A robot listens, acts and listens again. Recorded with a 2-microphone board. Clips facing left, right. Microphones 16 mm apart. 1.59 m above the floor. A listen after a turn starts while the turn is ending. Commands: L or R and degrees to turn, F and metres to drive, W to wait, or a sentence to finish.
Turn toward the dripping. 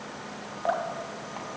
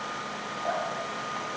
L30
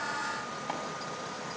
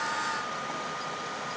W
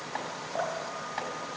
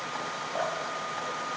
Found it: dripping, straight ahead, 2 to 4 m away.